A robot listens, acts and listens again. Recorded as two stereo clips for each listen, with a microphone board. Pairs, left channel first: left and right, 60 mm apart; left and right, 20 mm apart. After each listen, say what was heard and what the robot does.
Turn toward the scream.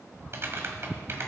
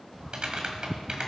Keep listening.
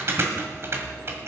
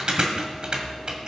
Keep listening.
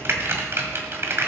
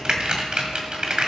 I can't make out a scream to turn to.